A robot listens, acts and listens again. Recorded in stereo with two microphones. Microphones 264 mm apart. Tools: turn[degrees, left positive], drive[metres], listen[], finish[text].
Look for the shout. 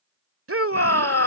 Thought: The shout: about 55° right or 125° right.
Action: turn[-55]
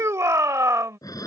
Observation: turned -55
Thought: So it is at 10° right.
Action: turn[-10]
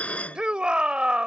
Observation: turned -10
Action: finish[Found it: a shout, straight ahead.]